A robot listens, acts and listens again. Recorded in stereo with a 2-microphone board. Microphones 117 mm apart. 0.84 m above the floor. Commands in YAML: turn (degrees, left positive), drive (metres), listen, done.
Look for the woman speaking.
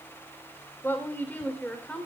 turn: 30
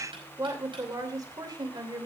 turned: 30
turn: -40
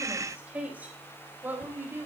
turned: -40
turn: -20
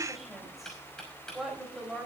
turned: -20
done: "Found it: a woman speaking, straight ahead, over 4 m away."